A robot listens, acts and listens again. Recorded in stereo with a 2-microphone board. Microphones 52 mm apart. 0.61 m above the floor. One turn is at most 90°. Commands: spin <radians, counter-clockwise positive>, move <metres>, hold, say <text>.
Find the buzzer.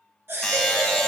spin 0.52
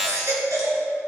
spin -0.35
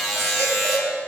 say Facing the buzzer, 1 to 2 m away.